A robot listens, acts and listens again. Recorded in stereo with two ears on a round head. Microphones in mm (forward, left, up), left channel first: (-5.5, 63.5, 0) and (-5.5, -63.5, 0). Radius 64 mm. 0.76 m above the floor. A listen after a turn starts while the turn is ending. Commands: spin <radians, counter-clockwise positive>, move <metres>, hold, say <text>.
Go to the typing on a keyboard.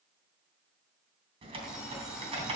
spin -0.79
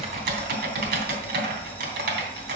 spin -1.66
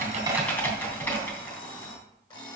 spin 0.26
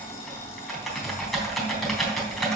move 1.0
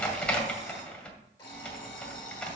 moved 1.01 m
spin 0.17
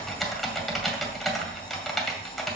move 1.0
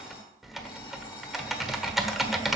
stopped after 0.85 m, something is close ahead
say I am next to the typing on a keyboard.